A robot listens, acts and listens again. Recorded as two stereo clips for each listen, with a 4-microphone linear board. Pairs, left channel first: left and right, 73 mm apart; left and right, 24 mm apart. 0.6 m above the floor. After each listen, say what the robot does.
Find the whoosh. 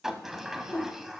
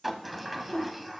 Turn 65° left.
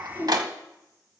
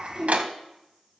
Turn 40° left.
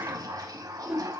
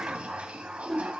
Turn 10° right.
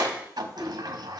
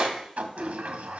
Facing the whoosh.